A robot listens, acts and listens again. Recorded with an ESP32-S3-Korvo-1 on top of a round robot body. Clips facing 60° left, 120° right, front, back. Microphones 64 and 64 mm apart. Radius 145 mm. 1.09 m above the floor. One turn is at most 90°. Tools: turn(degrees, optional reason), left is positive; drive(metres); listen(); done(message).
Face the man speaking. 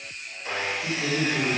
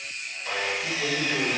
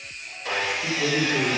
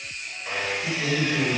turn(degrees=-35, reason="The man speaking: 35° right.")
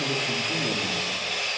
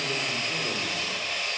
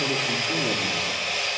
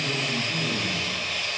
listen()
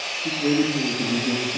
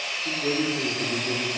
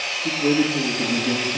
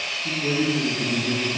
turn(degrees=40, reason="The man speaking is now 40° left.")
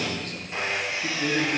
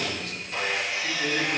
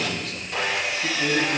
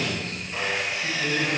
turn(degrees=25, reason="The man speaking is now 25° left.")
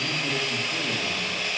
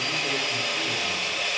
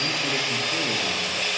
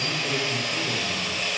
listen()
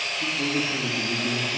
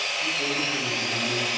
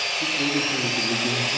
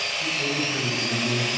done("Facing the man speaking, 2 to 4 m away.")